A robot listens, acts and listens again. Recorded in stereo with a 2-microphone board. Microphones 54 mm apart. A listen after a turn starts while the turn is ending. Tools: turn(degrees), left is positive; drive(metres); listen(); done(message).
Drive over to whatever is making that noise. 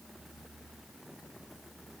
listen()
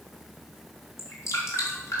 turn(degrees=60)
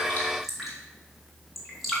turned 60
drive(metres=1.0)
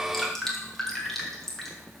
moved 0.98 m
drive(metres=1.0)
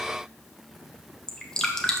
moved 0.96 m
turn(degrees=10)
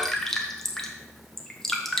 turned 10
drive(metres=1.0)
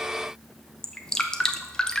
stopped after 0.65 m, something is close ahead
turn(degrees=10)
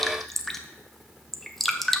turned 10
done("Arrived at the dripping, straight ahead.")